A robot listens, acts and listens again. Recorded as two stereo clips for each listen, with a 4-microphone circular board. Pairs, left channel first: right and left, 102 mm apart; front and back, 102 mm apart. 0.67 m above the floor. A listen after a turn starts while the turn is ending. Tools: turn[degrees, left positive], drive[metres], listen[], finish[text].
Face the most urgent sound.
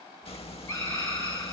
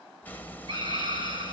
Thought: The scream: 155° right.
Action: turn[-155]
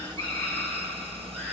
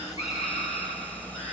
Action: listen[]
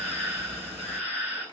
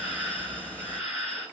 Thought: The scream is now 10° right.
Action: turn[-10]
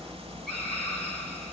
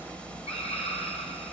Action: finish[Found it: a scream, straight ahead.]